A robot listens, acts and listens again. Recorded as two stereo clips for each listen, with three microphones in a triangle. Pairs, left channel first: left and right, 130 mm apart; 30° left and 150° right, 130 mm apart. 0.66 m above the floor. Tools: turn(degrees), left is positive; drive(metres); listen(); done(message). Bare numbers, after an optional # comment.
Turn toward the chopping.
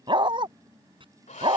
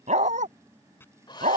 # The chopping: 45° right.
turn(-45)
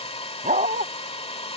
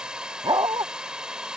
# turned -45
listen()
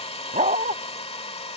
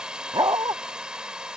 listen()
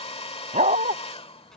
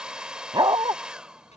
done("Facing where the chopping came from. I can't hear it now.")